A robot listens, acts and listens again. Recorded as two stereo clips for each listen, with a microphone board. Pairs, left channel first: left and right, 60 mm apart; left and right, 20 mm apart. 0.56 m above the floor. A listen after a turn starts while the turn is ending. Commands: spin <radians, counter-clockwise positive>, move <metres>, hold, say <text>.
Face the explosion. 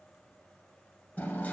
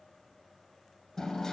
hold
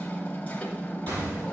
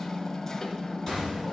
spin -1.57
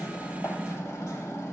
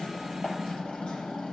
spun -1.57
say I heard an explosion from this way, but can't make it out now.